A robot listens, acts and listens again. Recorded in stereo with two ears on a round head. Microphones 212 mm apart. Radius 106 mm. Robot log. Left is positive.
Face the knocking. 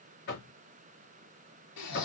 note: The knocking: about 45° left or 135° left.
cmd yaw +45
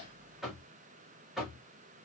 end: Found it: knocking, straight ahead.